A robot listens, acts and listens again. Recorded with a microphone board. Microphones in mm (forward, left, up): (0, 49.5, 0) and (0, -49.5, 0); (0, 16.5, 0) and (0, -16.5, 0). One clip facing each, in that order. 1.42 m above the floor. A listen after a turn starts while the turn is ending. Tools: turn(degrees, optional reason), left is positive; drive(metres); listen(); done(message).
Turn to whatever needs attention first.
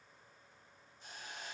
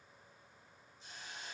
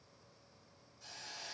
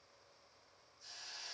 listen()
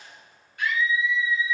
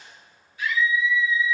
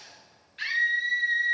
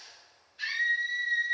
turn(degrees=60, reason="The scream: about 60° left or 120° left.")
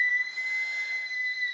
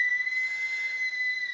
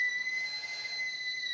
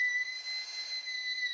done("Facing the scream.")